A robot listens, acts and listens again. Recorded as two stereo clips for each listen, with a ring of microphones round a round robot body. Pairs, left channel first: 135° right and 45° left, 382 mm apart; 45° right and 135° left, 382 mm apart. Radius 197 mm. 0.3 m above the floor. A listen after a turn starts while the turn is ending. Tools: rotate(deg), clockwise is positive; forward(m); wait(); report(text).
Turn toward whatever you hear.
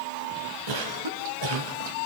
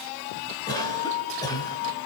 rotate(-35)
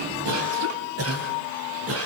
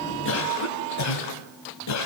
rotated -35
report("Facing the cough, 2 to 4 m away.")